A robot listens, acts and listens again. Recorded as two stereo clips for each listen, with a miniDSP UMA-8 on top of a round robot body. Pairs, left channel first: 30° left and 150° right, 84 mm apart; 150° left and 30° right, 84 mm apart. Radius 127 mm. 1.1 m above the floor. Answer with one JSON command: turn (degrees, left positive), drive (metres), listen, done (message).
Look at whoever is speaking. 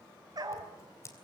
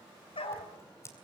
{"listen": true}
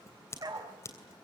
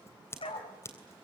{"listen": true}
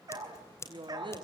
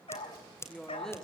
{"turn": -125}
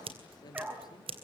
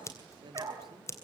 {"done": "Facing the woman speaking, 2 to 4 m away."}